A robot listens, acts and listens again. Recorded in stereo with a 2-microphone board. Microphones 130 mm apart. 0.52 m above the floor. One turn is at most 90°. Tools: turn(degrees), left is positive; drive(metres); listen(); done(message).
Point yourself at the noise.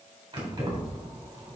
turn(degrees=-30)
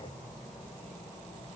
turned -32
turn(degrees=15)
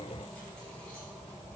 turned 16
turn(degrees=10)
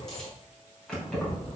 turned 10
turn(degrees=10)
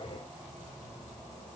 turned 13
done("Facing the keys jangling, 2 to 4 m away.")